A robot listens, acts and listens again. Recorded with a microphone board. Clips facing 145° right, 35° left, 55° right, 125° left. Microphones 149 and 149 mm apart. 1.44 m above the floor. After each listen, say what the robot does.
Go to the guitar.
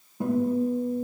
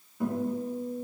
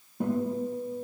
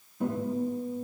Turn 85° right.
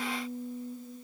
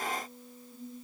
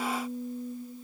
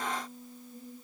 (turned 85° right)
Turn 15° right.
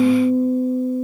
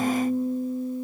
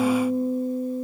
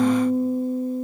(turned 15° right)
Drive 1.0 m forward.
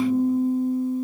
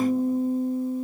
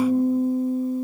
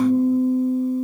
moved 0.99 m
Drive 1.0 m forward.
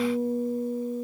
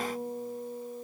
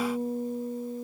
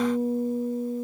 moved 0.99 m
Turn 15° right.
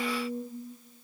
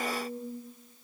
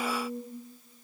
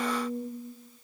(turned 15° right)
Drive 1.0 m forward.
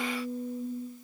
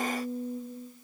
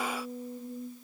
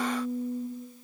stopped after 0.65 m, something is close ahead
I am next to the guitar.